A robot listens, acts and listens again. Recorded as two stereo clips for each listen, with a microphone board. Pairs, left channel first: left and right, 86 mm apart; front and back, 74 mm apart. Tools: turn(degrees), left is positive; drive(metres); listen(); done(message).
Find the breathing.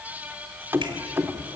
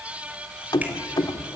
listen()
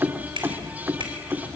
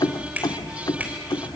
listen()
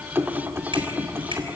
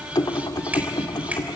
done("I can't make out breathing, only keys jangling and a finger snap.")